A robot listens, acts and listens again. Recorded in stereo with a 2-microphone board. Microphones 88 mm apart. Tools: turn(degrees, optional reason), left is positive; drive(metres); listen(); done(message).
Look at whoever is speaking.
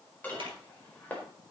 listen()
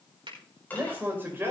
turn(degrees=-25, reason="The man speaking: about 25° right or 155° right.")
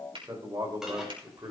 turn(degrees=-125, reason="So it is at 125° right.")
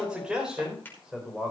done("Found it: a man speaking, straight ahead, over 4 m away.")